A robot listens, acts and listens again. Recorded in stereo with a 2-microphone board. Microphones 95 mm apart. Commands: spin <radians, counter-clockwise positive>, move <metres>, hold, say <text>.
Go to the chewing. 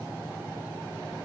hold
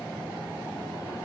hold
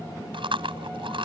spin -1.13
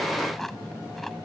hold
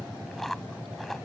hold
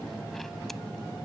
say I heard chewing, but can't make it out now. It was about straight ahead or 50° right. I did not reach it.